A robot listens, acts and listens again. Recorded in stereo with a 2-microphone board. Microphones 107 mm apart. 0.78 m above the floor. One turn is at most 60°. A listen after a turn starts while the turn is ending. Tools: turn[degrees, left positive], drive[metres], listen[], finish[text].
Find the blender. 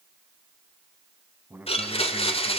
Thought: The blender: about 65° left or 115° left.
Action: turn[60]
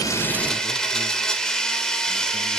Action: finish[Found it: a blender, straight ahead.]